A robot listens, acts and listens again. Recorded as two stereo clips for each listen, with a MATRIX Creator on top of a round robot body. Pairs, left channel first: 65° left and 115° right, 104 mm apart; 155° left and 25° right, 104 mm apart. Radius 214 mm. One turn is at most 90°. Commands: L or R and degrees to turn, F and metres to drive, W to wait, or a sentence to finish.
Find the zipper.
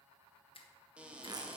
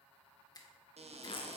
R90
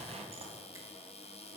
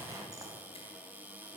R80
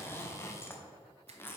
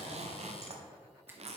Found it: a zipper, straight ahead, under 1 m away.